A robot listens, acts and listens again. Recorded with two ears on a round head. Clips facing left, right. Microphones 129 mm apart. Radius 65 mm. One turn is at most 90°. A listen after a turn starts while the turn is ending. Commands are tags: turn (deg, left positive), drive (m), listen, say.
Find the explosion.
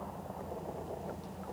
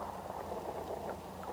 <listen/>
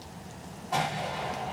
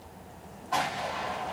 <turn deg="30"/>
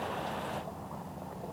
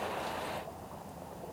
<listen/>
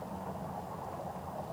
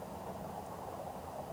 <say>I heard an explosion, but can't make it out now. It was about 25° right or 145° left.</say>